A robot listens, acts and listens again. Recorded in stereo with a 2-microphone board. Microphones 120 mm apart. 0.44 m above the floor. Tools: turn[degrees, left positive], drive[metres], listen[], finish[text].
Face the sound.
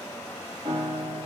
Thought: The piano: about 70° right or 110° right.
Action: turn[-70]
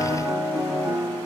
Thought: So it is at 25° right.
Action: turn[-25]
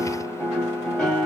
Action: finish[Facing the piano, 1 to 2 m away.]